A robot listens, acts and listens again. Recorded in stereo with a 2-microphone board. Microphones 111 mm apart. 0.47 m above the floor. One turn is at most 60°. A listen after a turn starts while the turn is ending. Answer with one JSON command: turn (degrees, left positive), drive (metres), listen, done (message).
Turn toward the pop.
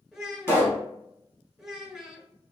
{"turn": 25}
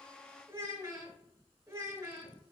{"listen": true}
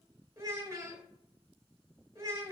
{"done": "I heard a pop, but can't make it out now. It was about straight ahead or 130° left."}